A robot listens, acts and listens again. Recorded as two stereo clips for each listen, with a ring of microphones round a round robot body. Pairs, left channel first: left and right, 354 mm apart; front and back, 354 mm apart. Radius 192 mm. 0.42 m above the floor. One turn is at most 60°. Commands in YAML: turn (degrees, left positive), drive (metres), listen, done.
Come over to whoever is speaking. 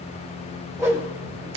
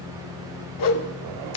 listen: true
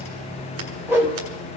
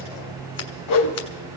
listen: true
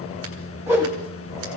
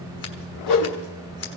done: "I can't make out anyone speaking to turn to."